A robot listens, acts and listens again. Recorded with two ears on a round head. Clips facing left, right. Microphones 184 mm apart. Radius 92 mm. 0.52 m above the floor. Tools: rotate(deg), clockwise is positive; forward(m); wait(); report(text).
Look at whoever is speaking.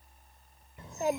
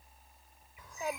rotate(-25)
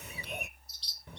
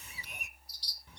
rotate(-130)
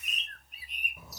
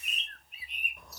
report("Facing the child speaking.")